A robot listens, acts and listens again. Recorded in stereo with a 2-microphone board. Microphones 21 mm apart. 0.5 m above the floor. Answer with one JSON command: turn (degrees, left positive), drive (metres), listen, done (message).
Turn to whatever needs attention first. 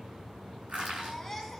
{"turn": 30}
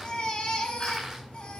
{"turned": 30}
{"turn": 140}
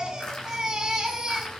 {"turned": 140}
{"turn": -30}
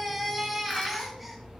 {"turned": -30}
{"done": "Facing the baby crying, 2 to 4 m away."}